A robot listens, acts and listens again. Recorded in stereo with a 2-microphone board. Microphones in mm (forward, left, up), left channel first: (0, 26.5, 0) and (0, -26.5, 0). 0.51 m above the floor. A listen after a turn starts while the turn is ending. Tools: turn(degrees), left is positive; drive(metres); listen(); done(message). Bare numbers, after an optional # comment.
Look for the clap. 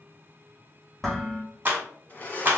# The clap: about 35° right or 145° right.
turn(-35)
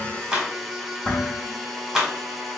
done("Found it: a clap, straight ahead, 1 to 2 m away.")